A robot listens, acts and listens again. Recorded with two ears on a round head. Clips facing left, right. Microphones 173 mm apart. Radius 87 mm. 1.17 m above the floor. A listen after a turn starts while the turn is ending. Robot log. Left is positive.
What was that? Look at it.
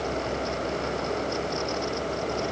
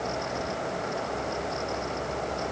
cmd idle
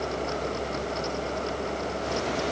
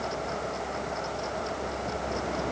cmd idle
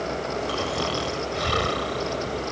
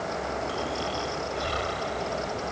note: The snoring: about 75° left or 105° left.
cmd yaw +75
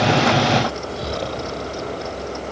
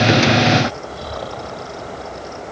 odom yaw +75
note: So it is at 30° left.
cmd yaw +30
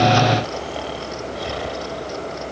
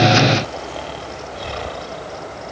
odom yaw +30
end: Found it: snoring, straight ahead.